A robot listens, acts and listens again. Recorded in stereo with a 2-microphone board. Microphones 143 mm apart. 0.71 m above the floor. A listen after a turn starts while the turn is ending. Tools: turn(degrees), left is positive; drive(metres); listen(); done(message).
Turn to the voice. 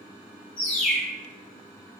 listen()
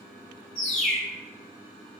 listen()
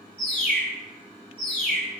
done("I can't make out anyone speaking, only a bird.")